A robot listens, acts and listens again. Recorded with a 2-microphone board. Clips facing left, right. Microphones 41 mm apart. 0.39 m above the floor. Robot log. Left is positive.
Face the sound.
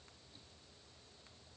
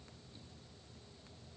cmd idle
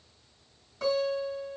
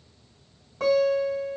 note: The guitar: about 60° right or 120° right.
cmd yaw -60
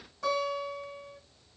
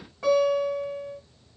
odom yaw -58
note: So it is at 30° right.
cmd yaw -30
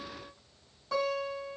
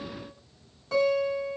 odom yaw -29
end: Found it: a guitar, straight ahead.